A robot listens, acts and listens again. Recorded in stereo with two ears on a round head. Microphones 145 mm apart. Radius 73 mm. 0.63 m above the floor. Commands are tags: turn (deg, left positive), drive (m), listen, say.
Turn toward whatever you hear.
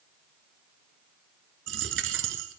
<turn deg="-90"/>
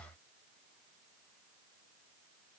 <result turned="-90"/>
<say>Facing where the dropped coin came from. I can't hear it now.</say>